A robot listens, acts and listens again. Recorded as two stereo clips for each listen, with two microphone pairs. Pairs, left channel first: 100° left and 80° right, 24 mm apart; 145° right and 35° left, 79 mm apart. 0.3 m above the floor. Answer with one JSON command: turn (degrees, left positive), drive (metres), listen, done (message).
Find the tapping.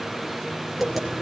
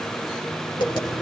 {"turn": -160}
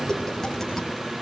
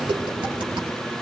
{"turn": 30}
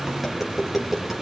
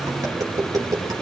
{"done": "Found it: tapping, straight ahead."}